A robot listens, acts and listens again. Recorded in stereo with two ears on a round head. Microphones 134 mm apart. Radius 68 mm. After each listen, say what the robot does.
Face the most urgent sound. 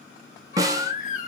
Turn 55° left.
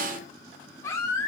Turn 25° left.
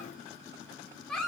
Found it: a baby crying, straight ahead, 1 to 2 m away.